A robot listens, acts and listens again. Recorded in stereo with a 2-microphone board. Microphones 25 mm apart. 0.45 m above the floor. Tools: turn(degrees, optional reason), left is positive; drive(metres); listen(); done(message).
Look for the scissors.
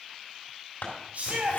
turn(degrees=70, reason="The scissors: about 70° left or 110° left.")
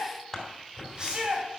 turn(degrees=15, reason="So it is at 15° left.")
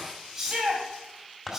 done("Facing the scissors, 2 to 4 m away.")